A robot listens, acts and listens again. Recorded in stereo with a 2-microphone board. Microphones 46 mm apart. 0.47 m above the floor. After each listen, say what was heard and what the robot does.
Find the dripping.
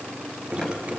The dripping: about 25° right or 155° right. Turn 25° right.
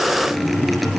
Facing the dripping.